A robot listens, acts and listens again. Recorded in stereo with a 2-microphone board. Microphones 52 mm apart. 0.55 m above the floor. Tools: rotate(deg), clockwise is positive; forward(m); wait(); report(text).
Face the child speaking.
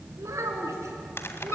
rotate(90)
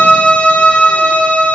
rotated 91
wait()
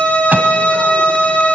wait()
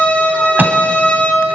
report("I heard a child speaking from this way, but can't make it out now.")